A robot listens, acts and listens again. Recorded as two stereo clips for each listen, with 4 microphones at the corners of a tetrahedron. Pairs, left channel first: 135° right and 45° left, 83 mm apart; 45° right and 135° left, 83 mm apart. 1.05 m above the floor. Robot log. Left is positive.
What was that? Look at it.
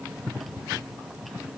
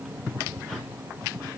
cmd idle
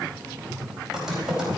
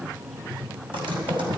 note: The typing on a keyboard: 130° left.
cmd yaw +130
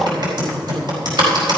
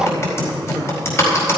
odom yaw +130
note: The typing on a keyboard is now 15° left.
cmd yaw +15
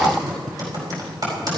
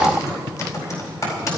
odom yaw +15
end: Facing the typing on a keyboard, over 4 m away.